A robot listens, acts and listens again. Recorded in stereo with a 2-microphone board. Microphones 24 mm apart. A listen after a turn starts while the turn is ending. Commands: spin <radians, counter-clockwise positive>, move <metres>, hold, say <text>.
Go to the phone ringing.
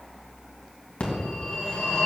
spin 1.31
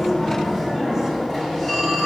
spin 0.35
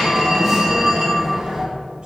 move 1.0
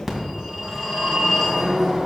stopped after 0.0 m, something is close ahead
say Blocked. The phone ringing is further on, straight ahead.